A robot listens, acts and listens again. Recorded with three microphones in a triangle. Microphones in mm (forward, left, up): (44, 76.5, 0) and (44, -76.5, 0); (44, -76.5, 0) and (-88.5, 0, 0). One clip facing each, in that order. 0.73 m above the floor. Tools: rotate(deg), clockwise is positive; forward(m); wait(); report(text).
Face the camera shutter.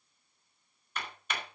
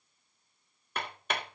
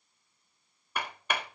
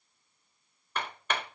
wait()
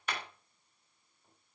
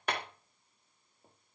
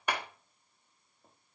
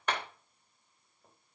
wait()
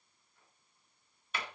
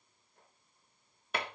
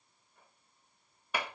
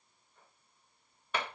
report("I can't make out a camera shutter, only hammering.")